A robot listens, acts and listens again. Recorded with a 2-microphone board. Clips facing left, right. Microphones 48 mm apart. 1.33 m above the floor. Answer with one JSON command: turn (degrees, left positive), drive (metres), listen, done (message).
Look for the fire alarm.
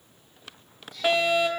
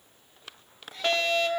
{"turn": 30}
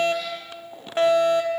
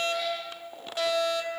{"turn": 135}
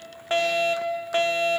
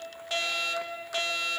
{"turn": 40}
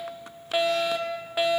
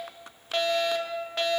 {"turn": 10}
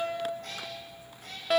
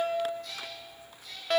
{"done": "Facing the fire alarm."}